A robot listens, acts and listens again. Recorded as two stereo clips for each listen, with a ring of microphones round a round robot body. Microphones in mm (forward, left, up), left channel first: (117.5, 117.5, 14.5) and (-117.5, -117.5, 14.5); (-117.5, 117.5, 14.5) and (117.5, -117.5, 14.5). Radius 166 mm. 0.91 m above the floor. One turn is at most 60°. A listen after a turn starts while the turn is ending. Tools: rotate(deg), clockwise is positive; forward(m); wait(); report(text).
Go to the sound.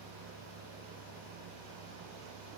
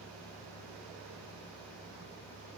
wait()
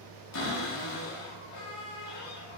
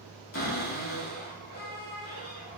rotate(-60)
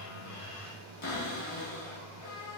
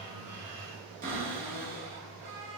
rotate(-20)
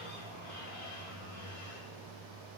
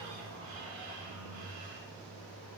forward(1.0)
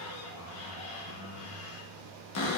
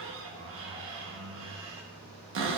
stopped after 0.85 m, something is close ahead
report("Arrived at the cupboard door, straight ahead.")